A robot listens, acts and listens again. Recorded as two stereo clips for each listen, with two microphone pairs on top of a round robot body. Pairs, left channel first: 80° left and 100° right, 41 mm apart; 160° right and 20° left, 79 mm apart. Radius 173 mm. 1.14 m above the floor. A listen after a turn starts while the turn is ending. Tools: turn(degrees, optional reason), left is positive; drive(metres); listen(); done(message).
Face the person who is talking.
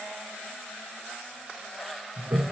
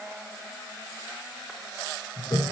listen()
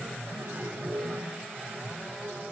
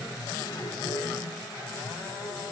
listen()
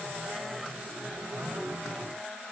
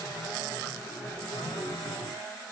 done("I can't make out anyone speaking, only a toilet flushing.")